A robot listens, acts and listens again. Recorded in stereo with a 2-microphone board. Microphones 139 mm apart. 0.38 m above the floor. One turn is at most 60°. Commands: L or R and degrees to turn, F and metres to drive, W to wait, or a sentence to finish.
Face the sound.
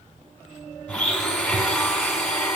L30
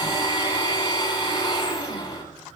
L60
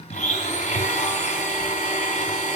L60
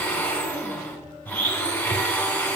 L10
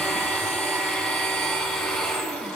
Facing the blender, 2 to 4 m away.